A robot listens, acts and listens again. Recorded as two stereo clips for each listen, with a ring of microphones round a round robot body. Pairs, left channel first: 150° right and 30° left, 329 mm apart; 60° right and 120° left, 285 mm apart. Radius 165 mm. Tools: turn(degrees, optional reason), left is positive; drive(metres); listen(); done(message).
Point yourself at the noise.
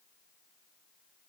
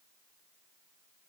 listen()
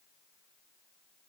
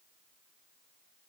listen()
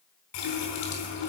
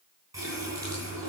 turn(degrees=-160, reason="The running tap: 160° right.")
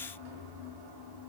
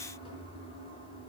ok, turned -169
turn(degrees=10, reason="The running tap is now 10° left.")
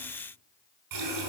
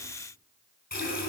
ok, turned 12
done("Facing the running tap.")